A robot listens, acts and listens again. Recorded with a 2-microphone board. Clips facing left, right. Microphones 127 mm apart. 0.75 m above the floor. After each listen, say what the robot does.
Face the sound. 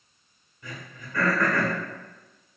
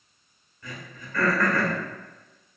Turn 20° left.
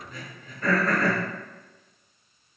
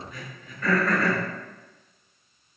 Turn 140° left.
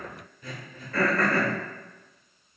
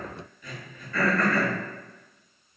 Turn 35° left.
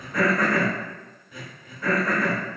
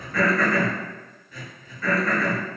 Turn 15° left.
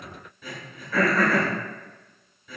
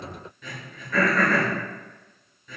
Facing the throat clearing, 1 to 2 m away.